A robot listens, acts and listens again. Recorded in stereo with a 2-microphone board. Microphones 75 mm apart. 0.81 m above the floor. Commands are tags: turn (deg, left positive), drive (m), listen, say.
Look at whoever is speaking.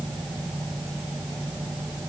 <listen/>
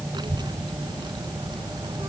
<turn deg="-90"/>
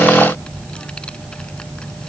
<turn deg="10"/>
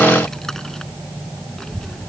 <say>Found it: a child speaking, straight ahead.</say>